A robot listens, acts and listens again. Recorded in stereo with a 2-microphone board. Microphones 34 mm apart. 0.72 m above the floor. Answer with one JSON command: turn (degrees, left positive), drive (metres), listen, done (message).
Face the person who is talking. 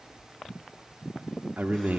{"turn": -60}
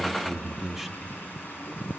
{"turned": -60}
{"turn": -10}
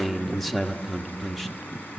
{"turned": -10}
{"done": "Found it: a man speaking, straight ahead, 1 to 2 m away."}